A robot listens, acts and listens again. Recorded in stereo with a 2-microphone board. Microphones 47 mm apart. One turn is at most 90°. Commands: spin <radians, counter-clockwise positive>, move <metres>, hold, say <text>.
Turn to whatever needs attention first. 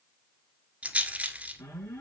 spin 1.31
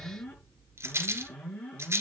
spin 0.52
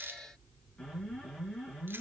spin 0.17
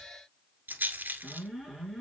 say Facing the alarm.